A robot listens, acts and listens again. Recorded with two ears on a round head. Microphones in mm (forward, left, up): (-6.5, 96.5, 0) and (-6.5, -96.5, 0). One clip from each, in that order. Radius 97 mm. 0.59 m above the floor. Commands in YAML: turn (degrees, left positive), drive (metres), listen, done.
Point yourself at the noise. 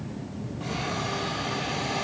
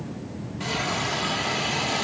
turn: -70
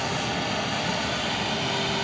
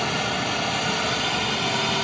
turn: -10
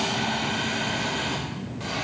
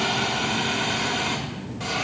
turn: -10
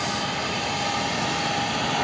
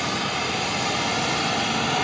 done: "Found it: a hiss, straight ahead, 1 to 2 m away."